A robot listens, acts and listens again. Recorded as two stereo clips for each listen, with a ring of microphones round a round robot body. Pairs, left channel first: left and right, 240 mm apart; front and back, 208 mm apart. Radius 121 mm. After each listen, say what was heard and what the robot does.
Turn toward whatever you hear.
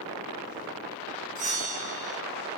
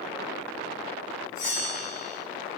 The bell: 30° right. Turn 30° right.
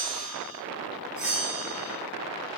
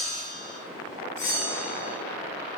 Facing the bell, 1 to 2 m away.